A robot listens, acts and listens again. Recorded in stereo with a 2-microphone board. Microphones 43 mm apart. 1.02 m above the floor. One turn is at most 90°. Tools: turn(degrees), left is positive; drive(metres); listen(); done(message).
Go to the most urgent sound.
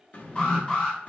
turn(degrees=30)
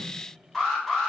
drive(metres=1.0)
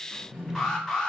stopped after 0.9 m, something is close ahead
turn(degrees=25)
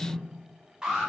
turn(degrees=-20)
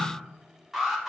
done("Arrived at the alarm, straight ahead.")